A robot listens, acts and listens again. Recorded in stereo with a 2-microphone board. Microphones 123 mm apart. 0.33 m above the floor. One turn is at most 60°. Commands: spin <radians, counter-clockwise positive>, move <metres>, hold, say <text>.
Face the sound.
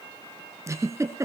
spin -0.44
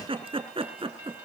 spin -1.05
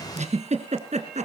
spin -1.05
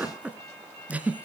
spin -0.17
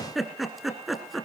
say Found it: a giggle, straight ahead.